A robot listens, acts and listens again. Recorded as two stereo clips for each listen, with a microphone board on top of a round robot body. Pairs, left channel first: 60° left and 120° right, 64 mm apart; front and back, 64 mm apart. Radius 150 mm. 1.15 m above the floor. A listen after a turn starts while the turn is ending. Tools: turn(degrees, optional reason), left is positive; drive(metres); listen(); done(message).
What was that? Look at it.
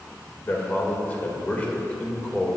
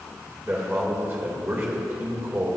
turn(degrees=135, reason="The man speaking: 135° left.")
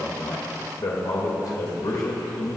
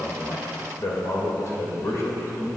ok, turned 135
turn(degrees=50, reason="The man speaking is now 50° left.")
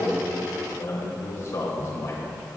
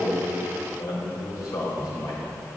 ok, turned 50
turn(degrees=20, reason="The man speaking is now 20° left.")
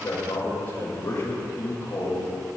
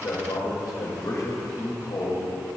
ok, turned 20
done("Found it: a man speaking, straight ahead, 2 to 4 m away.")